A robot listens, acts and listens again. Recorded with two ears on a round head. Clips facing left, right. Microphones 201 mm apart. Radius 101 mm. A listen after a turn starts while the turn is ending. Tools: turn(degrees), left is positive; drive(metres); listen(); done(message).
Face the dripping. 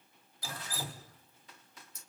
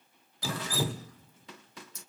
turn(degrees=-55)
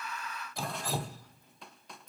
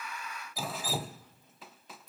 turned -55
done("Facing the dripping, under 1 m away.")